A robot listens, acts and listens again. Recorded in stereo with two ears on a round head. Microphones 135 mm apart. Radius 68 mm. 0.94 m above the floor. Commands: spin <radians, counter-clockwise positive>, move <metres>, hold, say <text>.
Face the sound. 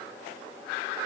hold
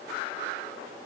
hold
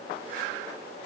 say I can't make out anything to turn to.